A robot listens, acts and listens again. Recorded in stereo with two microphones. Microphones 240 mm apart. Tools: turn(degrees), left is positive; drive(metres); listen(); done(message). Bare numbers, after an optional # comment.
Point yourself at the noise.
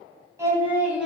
turn(-30)
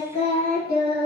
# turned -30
# So it is at 40° left.
turn(40)
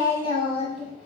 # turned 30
# The singing is now 30° left.
turn(30)
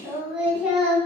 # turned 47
done("Found it: singing, straight ahead.")